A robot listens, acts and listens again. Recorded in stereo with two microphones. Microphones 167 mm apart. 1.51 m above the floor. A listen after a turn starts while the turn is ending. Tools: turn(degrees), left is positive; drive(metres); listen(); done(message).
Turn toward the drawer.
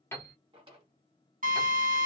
turn(degrees=-30)
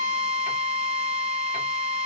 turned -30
listen()
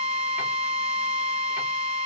listen()
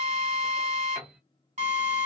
done("I heard a drawer, but can't make it out now. It was about straight ahead or 120° right.")